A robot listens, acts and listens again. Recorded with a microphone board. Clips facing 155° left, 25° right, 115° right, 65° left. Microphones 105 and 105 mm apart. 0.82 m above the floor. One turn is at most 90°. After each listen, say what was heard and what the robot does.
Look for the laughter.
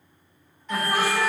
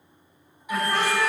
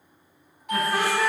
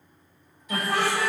The laughter: 75° left. Turn 75° left.
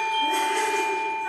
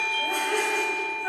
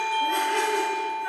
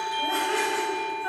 Keep listening.
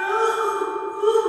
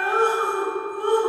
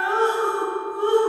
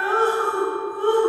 The laughter is now 20° left. Turn 20° left.
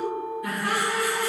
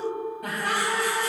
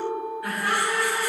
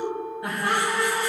Found it: laughter, straight ahead.